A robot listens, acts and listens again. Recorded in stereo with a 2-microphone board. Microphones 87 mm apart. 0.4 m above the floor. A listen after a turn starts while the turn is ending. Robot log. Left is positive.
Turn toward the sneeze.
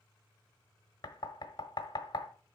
cmd idle
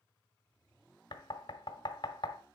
cmd idle
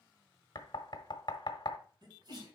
note: The sneeze: about 50° right or 130° right.
cmd yaw -50
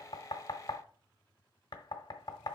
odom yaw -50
cmd idle
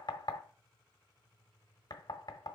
end: I heard a sneeze, but can't make it out now. It was about straight ahead or 80° right.